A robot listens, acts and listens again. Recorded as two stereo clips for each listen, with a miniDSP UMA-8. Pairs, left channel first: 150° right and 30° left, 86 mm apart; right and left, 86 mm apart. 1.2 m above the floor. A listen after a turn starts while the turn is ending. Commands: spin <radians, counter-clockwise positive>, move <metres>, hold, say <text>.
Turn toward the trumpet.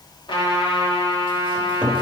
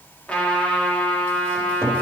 spin -2.88
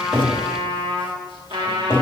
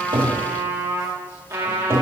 spin 0.52
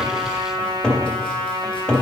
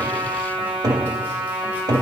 spin 0.17
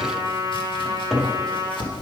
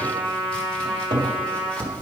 say Found it: a trumpet, straight ahead, 2 to 4 m away.